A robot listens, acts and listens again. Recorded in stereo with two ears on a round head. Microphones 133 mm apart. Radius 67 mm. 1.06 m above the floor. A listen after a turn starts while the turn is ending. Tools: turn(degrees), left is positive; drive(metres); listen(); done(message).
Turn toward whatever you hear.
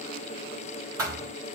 turn(degrees=-25)
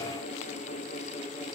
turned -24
listen()
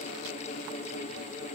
done("I heard a thud, but can't make it out now. It was about straight ahead or 130° right.")